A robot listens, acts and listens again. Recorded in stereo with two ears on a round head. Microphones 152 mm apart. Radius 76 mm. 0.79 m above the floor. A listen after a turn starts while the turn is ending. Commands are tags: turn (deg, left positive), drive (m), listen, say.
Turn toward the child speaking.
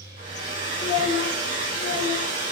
<turn deg="30"/>
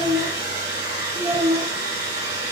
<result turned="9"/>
<turn deg="30"/>
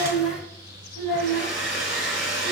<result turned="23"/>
<turn deg="20"/>
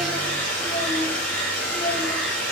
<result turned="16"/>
<turn deg="150"/>
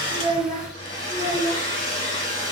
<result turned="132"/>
<turn deg="15"/>
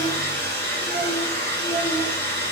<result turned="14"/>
<listen/>
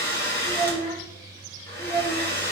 <say>Facing the child speaking, 2 to 4 m away.</say>